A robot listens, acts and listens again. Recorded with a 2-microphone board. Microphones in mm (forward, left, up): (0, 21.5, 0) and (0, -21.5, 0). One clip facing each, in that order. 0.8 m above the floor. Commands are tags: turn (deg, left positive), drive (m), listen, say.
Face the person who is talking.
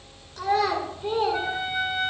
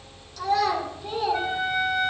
<turn deg="40"/>
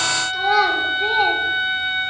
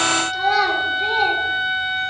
<turn deg="10"/>
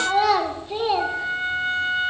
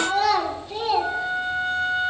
<turn deg="20"/>
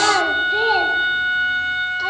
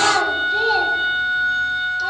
<turn deg="15"/>
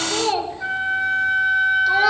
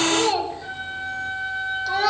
<say>Facing the child speaking, 1 to 2 m away.</say>